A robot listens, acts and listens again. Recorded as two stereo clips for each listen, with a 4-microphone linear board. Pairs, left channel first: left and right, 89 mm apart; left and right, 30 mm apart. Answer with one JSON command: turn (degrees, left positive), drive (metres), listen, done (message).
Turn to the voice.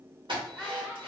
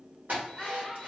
{"turn": -30}
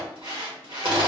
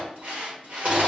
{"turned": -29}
{"listen": true}
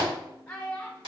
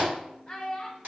{"turn": 15}
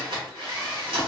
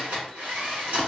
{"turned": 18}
{"listen": true}
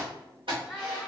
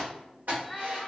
{"done": "Found it: a child speaking, straight ahead, under 1 m away."}